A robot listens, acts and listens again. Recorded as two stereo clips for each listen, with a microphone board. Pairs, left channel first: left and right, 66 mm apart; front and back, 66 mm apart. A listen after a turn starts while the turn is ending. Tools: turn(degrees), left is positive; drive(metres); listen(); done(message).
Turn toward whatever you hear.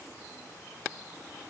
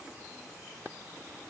listen()
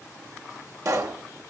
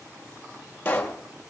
turn(degrees=-60)
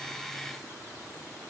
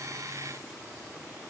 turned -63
done("Facing where the pop came from. I can't hear it now.")